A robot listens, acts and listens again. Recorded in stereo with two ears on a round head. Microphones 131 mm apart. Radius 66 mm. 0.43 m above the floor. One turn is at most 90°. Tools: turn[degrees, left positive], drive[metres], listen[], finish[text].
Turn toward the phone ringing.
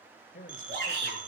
Thought: The phone ringing: about 60° right or 120° right.
Action: turn[-60]
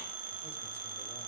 Thought: So it is at 60° right.
Action: turn[-60]
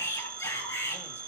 Thought: The phone ringing is now 20° right.
Action: turn[-20]
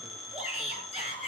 Action: finish[Facing the phone ringing.]